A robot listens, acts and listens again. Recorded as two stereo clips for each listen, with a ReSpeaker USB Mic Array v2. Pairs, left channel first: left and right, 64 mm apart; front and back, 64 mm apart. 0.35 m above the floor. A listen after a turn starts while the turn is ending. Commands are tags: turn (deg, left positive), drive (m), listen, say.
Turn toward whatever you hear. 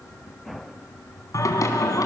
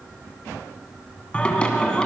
<turn deg="75"/>
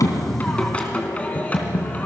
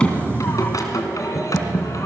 <turn deg="25"/>
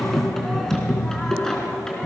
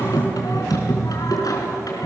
<turn deg="10"/>
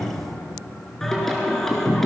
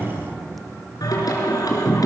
<say>Facing the singing.</say>